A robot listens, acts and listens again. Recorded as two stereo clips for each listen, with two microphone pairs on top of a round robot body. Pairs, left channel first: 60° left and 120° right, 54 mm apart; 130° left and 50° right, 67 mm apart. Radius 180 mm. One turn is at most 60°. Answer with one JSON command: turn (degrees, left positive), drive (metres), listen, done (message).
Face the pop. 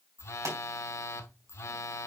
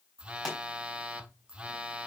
{"turn": -60}
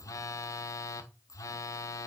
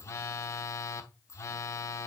{"turn": -60}
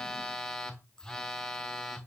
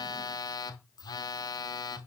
{"turn": -20}
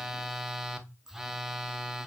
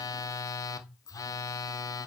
{"done": "I heard a pop from this way, but can't make it out now."}